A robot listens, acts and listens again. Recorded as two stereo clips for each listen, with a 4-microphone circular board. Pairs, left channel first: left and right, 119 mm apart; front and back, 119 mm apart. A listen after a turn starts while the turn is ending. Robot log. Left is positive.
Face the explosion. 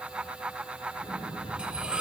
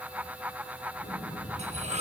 note: The explosion: 10° right.
cmd yaw -10
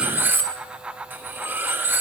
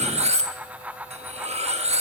end: I heard an explosion from this way, but can't make it out now.